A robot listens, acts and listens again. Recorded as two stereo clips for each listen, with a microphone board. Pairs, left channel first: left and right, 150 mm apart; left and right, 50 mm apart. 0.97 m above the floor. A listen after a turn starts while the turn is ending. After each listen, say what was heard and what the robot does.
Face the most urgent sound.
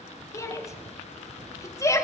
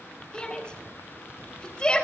The shout: about 25° left or 155° left. Turn 25° left.
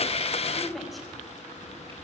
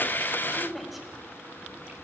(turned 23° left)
Found it: a shout, straight ahead, 2 to 4 m away.